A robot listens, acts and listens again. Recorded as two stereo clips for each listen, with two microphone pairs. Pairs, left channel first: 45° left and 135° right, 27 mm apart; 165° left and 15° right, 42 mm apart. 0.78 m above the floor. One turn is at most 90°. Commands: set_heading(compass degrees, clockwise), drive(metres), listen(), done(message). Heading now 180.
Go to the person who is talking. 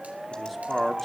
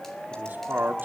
set_heading(230)
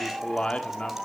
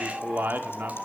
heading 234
drive(1.0)
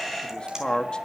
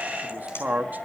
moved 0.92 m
drive(1.0)
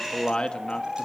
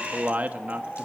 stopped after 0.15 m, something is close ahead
set_heading(224)
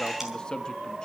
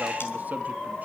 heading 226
listen()
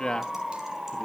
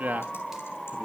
done("Arrived at the man speaking, straight ahead.")